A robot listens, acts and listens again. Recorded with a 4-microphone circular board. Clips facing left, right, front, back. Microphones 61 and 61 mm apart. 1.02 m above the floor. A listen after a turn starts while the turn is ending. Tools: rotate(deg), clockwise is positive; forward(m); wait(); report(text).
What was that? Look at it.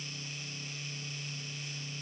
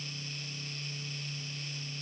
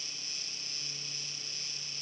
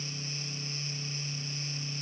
wait()
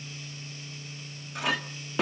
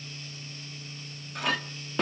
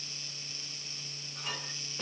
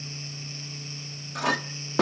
rotate(-180)
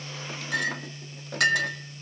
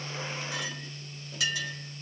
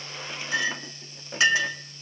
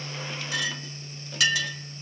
rotate(-60)
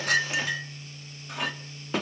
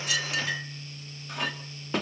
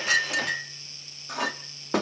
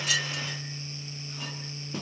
report("Facing the clink, 1 to 2 m away.")